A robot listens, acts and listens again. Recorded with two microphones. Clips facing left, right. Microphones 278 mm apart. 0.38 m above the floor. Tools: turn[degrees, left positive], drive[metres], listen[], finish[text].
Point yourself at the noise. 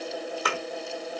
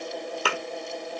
Thought: The thud: about 35° right or 145° right.
Action: turn[-35]
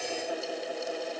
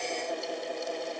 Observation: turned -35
Action: listen[]
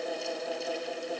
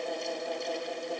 Action: finish[I heard a thud, but can't make it out now. It was about straight ahead or 110° right.]